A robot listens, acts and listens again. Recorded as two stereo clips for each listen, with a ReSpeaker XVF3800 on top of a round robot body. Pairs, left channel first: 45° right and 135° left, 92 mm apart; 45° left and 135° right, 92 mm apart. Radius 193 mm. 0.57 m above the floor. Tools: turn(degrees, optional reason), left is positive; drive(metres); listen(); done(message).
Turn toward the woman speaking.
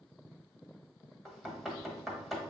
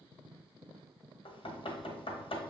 listen()
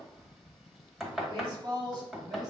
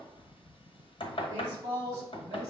turn(degrees=175, reason="The woman speaking: 175° left.")
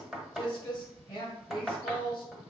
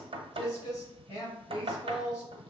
done("Found it: a woman speaking, straight ahead, over 4 m away.")